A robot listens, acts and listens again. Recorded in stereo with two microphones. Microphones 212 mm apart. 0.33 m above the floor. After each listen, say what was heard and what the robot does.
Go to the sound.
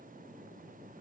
Keep listening.
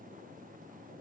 Keep listening.
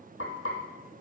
Turn 90° left.
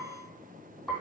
Drive 1.0 m forward.
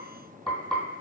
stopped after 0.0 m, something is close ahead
Blocked. The frying is further on, straight ahead.